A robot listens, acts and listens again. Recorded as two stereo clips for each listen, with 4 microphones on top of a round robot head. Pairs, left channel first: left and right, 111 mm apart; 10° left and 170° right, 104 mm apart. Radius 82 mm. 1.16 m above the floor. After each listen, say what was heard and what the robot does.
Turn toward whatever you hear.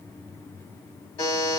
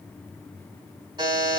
The buzzer: 140° left. Turn 140° left.
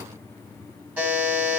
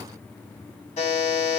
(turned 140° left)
The buzzer is now 15° right. Turn 15° right.
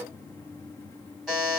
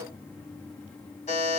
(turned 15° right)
Found it: a buzzer, straight ahead, 1 to 2 m away.